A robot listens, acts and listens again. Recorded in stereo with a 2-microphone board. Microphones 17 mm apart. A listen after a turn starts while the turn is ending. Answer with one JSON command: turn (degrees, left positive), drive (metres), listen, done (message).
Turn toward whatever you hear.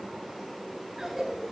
{"turn": -30}
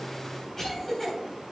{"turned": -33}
{"turn": 25}
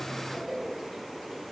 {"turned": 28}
{"done": "Facing the cough, 2 to 4 m away."}